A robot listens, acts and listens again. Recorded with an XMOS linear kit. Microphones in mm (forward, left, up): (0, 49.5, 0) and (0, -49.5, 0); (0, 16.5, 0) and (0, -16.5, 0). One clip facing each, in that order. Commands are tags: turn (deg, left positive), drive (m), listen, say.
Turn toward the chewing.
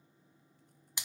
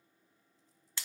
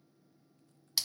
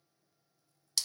<listen/>
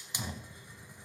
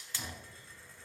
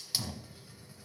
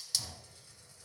<listen/>
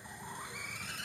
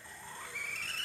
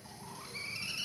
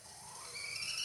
<say>I can't make out chewing, only a hiss.</say>